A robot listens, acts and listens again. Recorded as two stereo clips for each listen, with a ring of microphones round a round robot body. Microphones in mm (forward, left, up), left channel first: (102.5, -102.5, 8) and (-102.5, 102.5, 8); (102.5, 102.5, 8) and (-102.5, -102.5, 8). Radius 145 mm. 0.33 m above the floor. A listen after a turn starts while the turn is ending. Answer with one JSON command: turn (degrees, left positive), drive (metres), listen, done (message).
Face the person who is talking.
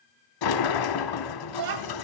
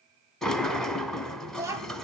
{"turn": 145}
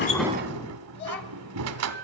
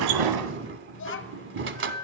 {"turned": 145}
{"done": "Facing the child speaking."}